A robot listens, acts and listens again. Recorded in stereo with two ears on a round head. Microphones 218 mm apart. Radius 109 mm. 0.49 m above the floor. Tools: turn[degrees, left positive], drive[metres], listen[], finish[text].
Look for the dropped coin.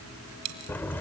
Thought: The dropped coin: about 75° right or 105° right.
Action: turn[-75]
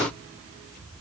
Action: listen[]
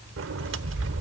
Action: finish[I heard a dropped coin, but can't make it out now. It was about straight ahead or 30° right.]